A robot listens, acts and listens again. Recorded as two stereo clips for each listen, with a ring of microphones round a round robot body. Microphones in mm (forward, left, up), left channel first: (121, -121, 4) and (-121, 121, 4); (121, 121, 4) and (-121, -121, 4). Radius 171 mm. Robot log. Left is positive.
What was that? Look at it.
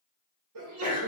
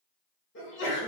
note: The sneeze: 95° left.
cmd yaw +95
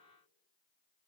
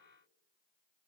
end: Facing where the sneeze came from. I can't hear it now.